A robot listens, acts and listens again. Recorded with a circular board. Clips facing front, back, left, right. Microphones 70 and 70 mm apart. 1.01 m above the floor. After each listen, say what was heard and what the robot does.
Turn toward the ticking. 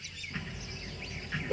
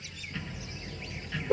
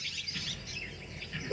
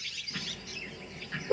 The ticking: 65° right. Turn 65° right.
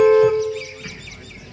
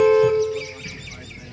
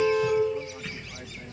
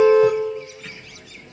Found it: ticking, straight ahead.